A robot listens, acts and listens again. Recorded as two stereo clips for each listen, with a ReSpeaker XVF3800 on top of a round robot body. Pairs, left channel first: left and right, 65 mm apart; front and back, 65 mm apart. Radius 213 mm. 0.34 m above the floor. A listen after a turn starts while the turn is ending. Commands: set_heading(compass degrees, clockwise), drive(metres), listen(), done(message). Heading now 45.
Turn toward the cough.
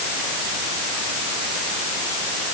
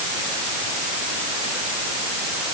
listen()
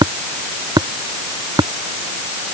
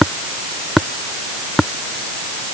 listen()
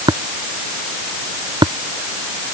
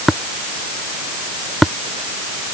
done("I can't make out a cough to turn to.")